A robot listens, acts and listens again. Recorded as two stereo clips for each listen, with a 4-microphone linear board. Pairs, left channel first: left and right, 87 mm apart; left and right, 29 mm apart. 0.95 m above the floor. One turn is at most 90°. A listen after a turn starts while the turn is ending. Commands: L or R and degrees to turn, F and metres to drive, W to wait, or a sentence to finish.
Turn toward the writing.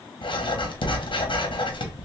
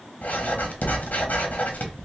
L90
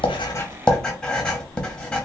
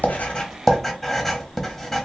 Found it: writing, straight ahead, under 1 m away.